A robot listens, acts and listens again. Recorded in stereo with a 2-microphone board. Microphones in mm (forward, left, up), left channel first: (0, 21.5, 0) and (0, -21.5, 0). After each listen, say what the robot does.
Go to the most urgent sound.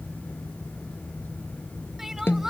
Turn 30° right.
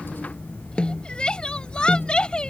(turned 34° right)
Turn 25° left.
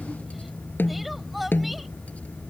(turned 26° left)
Drive 1.0 m forward.
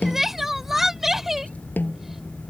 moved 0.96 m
Drive 1.0 m forward.
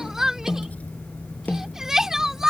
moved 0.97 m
Turn 10° right.
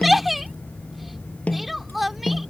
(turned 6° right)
Drive 1.0 m forward.
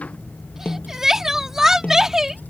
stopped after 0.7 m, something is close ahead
Turn 15° right.
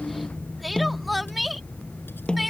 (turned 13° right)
Arrived at the crying, straight ahead.